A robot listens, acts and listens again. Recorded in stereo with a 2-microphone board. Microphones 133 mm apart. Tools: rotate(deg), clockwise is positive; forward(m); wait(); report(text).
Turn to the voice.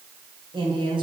rotate(40)
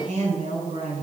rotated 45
rotate(90)
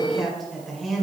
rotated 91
report("Facing the woman speaking, 2 to 4 m away.")